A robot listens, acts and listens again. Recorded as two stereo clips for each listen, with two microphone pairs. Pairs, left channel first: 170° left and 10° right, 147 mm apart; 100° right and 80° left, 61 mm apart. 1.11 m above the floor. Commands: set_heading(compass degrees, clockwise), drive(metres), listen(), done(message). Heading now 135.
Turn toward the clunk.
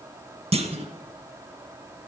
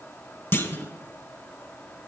set_heading(185)
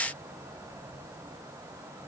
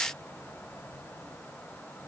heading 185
done("Facing where the clunk came from. I can't hear it now.")